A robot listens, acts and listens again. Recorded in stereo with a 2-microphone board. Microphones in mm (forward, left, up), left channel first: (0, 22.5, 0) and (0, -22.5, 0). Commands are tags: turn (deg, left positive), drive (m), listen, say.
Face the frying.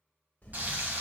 <turn deg="-40"/>
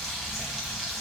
<say>Facing the frying, 2 to 4 m away.</say>